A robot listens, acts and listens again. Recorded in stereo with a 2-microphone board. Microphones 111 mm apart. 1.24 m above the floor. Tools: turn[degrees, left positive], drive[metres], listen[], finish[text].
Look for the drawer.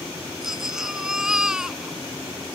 Action: listen[]
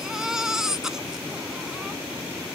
Action: listen[]
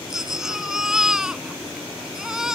Action: finish[I can't make out a drawer, only a baby crying.]